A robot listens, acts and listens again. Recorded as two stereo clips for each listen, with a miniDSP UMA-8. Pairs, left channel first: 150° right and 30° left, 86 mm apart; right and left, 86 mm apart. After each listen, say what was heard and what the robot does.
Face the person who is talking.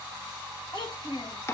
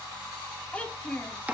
The child speaking: 165° right. Turn 165° right.
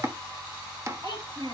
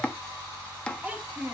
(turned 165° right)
The child speaking is now 20° left. Turn 20° left.
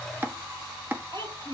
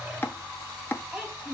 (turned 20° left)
Found it: a child speaking, straight ahead.